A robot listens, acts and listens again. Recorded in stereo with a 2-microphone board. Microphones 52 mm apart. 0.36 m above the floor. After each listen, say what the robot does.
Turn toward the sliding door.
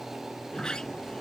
Turn 30° left.
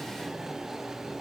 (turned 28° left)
Keep listening.
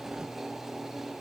Keep listening.
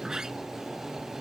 Turn 15° right.
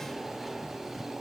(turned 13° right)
Keep listening.
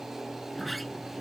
Facing the sliding door.